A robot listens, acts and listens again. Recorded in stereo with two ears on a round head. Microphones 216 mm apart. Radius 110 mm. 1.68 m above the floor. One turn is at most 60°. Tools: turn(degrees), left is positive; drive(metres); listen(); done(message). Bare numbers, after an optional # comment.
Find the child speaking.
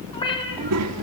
# The child speaking: about 70° right or 110° right.
turn(-60)
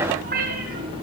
listen()
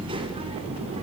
listen()
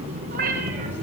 # So it is at 30° right.
turn(-30)
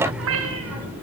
done("Found it: a child speaking, straight ahead.")